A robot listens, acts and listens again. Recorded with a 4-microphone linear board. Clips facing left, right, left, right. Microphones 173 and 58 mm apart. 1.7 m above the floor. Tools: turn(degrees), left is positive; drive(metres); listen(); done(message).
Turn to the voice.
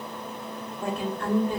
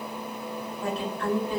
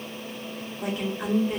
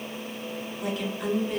turn(degrees=50)
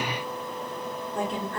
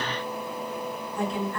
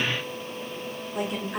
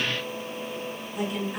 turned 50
turn(degrees=80)
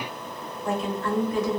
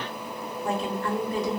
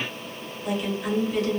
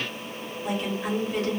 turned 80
turn(degrees=-35)
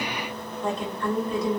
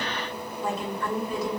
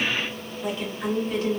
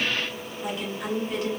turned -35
turn(degrees=-10)
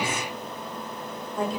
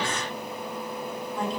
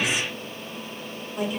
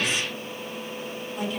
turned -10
done("Found it: a woman speaking, straight ahead, 1 to 2 m away.")